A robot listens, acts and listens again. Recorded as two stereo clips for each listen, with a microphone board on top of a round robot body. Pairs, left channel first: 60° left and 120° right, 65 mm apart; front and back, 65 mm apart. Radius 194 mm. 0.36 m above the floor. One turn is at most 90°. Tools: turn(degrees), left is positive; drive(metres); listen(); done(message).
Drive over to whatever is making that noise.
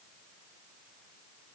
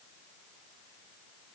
listen()
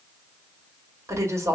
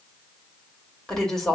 turn(degrees=-80)
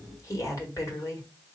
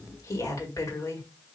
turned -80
turn(degrees=30)
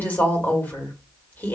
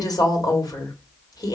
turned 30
drive(metres=1.0)
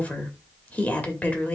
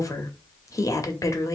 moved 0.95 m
drive(metres=1.0)
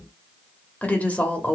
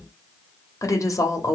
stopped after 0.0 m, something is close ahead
done("I am next to the woman speaking.")